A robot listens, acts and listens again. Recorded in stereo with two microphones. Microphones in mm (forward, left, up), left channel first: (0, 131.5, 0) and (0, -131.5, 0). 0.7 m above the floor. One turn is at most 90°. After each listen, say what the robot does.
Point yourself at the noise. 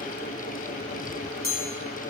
Turn 90° left.
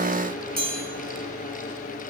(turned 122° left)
Turn 35° right.
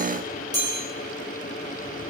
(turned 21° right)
Turn 15° right.
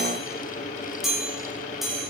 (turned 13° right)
Facing the chime, over 4 m away.